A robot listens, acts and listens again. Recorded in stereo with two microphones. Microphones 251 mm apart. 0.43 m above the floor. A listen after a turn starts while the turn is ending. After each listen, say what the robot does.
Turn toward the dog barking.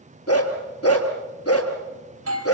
Turn 65° left.
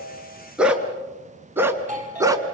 Turn 15° right.
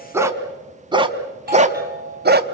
Turn 40° right.
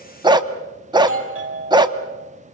Turn 15° right.
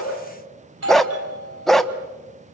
Found it: a dog barking, straight ahead, 1 to 2 m away.